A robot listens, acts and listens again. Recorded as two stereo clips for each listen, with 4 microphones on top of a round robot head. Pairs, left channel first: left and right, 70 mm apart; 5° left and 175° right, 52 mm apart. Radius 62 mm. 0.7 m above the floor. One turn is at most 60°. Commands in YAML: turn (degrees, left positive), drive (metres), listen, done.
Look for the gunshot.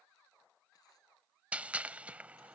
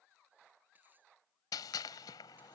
turn: -15
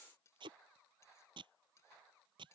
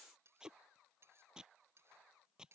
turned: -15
done: "Facing where the gunshot came from. I can't hear it now."